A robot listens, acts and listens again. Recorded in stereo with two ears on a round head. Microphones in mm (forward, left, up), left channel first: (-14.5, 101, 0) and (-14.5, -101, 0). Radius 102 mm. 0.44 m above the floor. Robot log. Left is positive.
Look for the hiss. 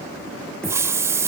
cmd yaw -30
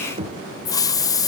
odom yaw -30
note: So it is at 20° left.
cmd yaw +20
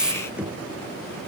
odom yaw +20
end: Found it: a hiss, straight ahead, 1 to 2 m away.